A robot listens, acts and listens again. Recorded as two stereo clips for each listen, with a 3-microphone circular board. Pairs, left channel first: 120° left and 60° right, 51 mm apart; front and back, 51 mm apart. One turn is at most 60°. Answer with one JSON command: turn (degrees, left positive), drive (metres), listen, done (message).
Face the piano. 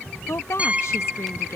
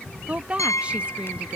{"done": "Found it: a piano, straight ahead."}